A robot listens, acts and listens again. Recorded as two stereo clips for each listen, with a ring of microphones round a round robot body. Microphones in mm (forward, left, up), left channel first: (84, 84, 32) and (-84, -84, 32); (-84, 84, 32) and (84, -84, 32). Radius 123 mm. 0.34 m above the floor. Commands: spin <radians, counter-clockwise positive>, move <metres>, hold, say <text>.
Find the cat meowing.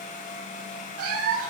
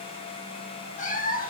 spin -2.97
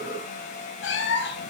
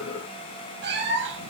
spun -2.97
say Facing the cat meowing.